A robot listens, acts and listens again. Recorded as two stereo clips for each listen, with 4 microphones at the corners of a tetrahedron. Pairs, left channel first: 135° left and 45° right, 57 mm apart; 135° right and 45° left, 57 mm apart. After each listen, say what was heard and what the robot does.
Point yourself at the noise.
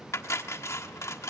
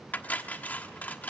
The cutlery clinking: 165° left. Turn 165° left.
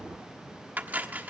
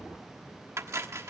The cutlery clinking is now 15° left. Turn 15° left.
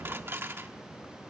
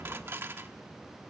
Found it: cutlery clinking, straight ahead.